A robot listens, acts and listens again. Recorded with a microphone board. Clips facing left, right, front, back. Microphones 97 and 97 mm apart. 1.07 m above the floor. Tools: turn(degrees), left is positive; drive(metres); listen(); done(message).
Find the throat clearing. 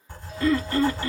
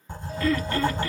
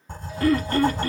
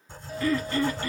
turn(degrees=30)
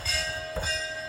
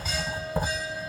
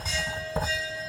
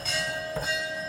listen()
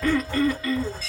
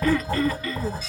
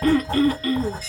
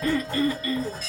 done("Found it: throat clearing, straight ahead, under 1 m away.")